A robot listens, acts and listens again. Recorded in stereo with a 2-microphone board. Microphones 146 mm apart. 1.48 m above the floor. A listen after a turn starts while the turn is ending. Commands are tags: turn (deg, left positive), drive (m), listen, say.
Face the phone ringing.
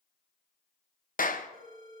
<turn deg="-70"/>
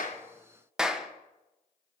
<listen/>
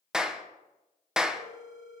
<say>Found it: a phone ringing, straight ahead, over 4 m away.</say>